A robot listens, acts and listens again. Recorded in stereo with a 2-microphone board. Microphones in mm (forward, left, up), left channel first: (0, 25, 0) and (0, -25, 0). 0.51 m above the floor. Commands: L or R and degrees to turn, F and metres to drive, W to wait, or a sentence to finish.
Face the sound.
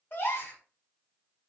L45
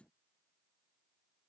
W
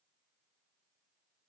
I heard a gasp, but can't make it out now. It was about straight ahead or 90° left.